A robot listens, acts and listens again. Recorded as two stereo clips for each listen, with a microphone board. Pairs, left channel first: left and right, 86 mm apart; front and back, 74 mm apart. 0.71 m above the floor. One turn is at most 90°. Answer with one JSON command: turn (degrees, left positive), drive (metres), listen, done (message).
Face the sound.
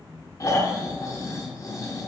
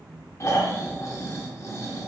{"turn": 45}
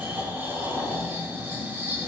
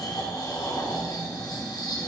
{"turn": -25}
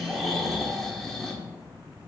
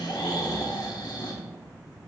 {"done": "Facing the snoring."}